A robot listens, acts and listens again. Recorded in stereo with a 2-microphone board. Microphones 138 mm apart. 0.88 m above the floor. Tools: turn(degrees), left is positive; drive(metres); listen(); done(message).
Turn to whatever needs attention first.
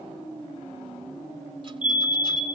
turn(degrees=-70)
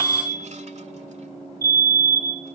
turn(degrees=-25)
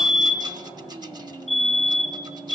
done("Found it: a fire alarm, straight ahead.")